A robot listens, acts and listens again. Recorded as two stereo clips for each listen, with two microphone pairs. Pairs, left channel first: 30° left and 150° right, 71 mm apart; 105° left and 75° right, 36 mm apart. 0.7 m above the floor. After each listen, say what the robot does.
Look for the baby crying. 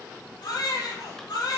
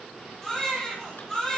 Turn 30° left.
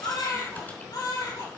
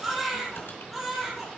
Turn 10° left.
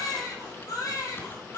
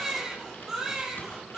Facing the baby crying.